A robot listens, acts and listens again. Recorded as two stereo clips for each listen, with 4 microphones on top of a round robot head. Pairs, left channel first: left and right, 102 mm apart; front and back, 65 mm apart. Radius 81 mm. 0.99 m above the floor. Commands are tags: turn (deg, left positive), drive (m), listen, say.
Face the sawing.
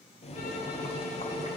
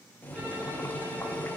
<listen/>
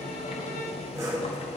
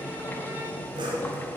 <turn deg="-160"/>
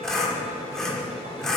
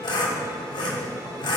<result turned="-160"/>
<say>Facing the sawing, 1 to 2 m away.</say>